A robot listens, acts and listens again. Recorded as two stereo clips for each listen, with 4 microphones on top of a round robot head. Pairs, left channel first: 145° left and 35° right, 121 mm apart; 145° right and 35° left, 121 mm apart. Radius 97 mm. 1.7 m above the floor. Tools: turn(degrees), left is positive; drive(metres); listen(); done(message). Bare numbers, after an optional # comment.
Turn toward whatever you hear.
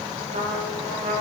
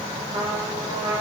# The trumpet: 25° right.
turn(-25)
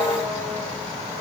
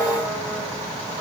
listen()
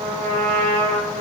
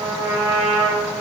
# The trumpet is now 20° right.
turn(-20)
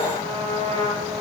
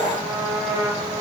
done("Facing the trumpet, over 4 m away.")